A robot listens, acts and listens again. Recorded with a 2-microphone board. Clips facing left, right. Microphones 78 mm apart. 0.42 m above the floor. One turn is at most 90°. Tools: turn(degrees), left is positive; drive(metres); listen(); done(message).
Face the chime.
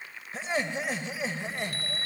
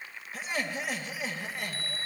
turn(degrees=70)
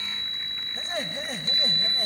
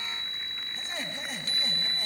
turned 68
turn(degrees=45)
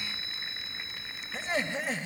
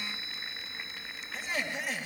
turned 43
done("Facing the chime.")